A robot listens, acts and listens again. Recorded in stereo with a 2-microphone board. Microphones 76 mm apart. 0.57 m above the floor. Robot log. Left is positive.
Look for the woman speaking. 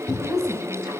note: The woman speaking: about 40° right or 140° right.
cmd yaw -40
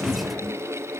cmd idle
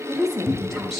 end: Found it: a woman speaking, straight ahead, 2 to 4 m away.